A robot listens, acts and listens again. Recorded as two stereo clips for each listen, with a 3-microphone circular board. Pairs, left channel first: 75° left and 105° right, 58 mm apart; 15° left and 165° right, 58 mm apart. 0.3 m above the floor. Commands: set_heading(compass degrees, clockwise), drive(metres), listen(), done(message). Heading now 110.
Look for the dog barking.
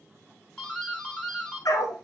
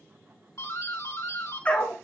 set_heading(30)
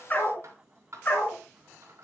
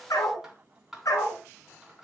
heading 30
set_heading(5)
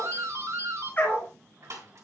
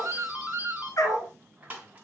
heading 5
set_heading(345)
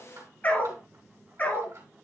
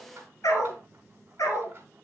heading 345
set_heading(330)
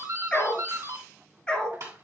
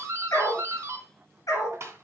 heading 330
done("Facing the dog barking.")